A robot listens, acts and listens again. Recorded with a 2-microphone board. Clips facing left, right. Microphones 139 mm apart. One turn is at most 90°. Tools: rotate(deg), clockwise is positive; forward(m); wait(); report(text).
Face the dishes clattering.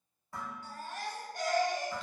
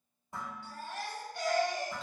rotate(20)
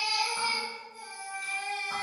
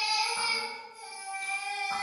wait()
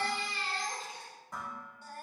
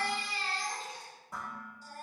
report("Found it: dishes clattering, straight ahead.")